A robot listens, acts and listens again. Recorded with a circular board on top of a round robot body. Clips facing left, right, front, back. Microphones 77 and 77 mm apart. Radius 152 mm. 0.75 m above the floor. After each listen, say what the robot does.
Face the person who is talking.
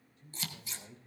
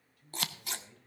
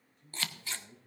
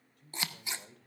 Turn 155° left.
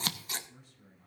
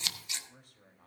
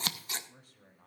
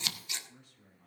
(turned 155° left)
Turn 50° right.
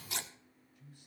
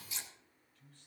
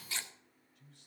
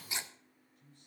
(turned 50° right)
Turn 15° left.
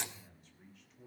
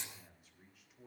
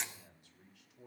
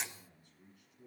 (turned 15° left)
Found it: a man speaking, straight ahead, 2 to 4 m away.